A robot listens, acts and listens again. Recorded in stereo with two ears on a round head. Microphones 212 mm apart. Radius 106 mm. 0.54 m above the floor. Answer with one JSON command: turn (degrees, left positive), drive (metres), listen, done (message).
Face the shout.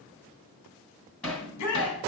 {"turn": 75}
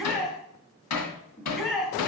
{"done": "Found it: a shout, straight ahead."}